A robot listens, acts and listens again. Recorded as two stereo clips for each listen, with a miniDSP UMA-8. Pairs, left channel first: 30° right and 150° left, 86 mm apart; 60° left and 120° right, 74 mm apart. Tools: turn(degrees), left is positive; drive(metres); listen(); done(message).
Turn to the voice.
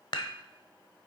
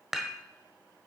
listen()
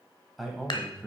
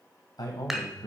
turn(degrees=60)
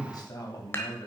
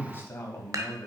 done("Found it: a man speaking, straight ahead, 2 to 4 m away.")